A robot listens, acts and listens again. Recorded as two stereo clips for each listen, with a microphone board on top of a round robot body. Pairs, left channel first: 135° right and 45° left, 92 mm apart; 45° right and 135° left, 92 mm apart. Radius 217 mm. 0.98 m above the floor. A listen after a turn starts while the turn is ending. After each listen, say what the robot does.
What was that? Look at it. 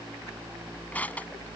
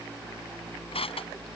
Turn 60° right.
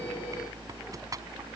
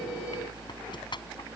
Turn 10° right.
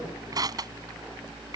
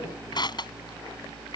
Found it: crushing, straight ahead.